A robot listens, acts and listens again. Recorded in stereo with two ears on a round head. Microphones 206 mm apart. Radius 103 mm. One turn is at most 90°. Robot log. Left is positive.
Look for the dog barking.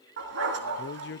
note: The dog barking: about 55° right or 125° right.
cmd yaw -55
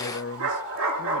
note: So it is at 65° right.
cmd yaw -65
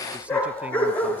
end: Facing the dog barking.